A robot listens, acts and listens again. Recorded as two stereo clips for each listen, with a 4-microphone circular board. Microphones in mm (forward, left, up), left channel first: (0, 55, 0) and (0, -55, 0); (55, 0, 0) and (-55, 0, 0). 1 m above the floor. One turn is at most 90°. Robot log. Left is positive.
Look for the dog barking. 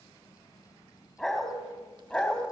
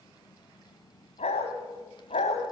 end: Found it: a dog barking, straight ahead.